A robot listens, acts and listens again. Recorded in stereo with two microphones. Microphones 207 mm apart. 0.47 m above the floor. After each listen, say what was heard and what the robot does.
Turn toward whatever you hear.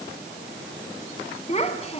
The child speaking: about 30° left or 150° left. Turn 30° left.
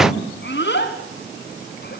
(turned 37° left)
So it is at 120° left. Turn 120° left.
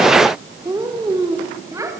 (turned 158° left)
The child speaking is now 15° right. Turn 15° right.
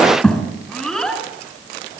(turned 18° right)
Facing the child speaking, 2 to 4 m away.